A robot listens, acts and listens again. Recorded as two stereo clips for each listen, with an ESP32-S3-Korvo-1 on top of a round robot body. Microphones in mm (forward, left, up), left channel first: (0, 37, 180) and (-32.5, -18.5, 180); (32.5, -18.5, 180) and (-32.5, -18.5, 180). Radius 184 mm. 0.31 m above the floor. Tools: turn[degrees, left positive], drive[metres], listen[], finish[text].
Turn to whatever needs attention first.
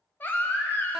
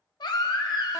Action: finish[Facing the baby crying, under 1 m away.]